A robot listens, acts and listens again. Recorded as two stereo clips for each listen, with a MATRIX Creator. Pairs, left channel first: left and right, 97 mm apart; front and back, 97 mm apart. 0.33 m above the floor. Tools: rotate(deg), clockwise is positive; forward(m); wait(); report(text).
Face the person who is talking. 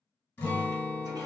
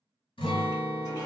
wait()
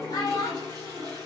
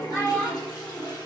rotate(-55)
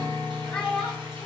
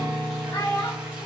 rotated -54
report("Facing the child speaking, under 1 m away.")